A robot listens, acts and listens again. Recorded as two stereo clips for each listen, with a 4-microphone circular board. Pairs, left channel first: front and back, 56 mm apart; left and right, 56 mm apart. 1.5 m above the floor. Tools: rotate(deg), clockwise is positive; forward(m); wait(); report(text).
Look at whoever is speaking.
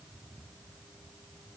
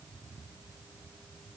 wait()
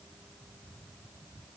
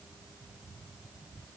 wait()
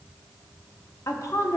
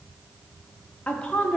rotate(-20)
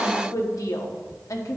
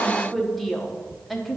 report("Found it: a woman speaking, straight ahead.")